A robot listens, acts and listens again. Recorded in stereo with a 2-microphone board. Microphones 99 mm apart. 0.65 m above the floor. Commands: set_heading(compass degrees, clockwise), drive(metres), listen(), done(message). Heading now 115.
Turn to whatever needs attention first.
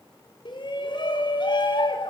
set_heading(60)
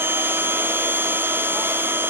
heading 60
listen()
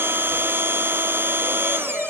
done("Facing the shout.")